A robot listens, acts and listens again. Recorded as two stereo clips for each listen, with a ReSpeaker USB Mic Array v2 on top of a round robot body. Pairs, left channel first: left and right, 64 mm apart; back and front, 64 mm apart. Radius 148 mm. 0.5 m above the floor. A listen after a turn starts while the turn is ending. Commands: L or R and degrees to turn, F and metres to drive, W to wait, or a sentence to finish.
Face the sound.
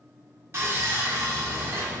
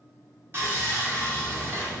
R45
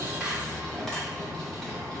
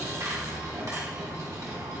L10
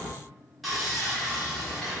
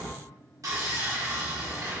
Found it: sawing, straight ahead.